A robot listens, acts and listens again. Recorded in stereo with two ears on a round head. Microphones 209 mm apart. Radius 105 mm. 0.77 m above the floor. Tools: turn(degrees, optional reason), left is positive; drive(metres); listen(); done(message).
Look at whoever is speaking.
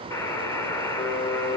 listen()
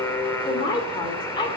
turn(degrees=20, reason="The woman speaking: about 20° left or 160° left.")
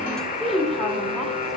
done("Facing the woman speaking.")